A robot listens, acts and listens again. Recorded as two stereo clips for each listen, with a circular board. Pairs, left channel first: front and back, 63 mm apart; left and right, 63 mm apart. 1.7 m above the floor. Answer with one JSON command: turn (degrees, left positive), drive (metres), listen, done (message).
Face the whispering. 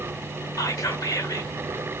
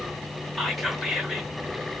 {"done": "Facing the whispering, 1 to 2 m away."}